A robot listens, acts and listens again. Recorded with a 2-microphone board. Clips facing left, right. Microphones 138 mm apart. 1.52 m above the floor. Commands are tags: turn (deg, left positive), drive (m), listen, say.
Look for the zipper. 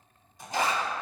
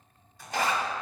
<turn deg="20"/>
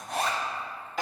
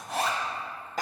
<say>Found it: a zipper, straight ahead, 1 to 2 m away.</say>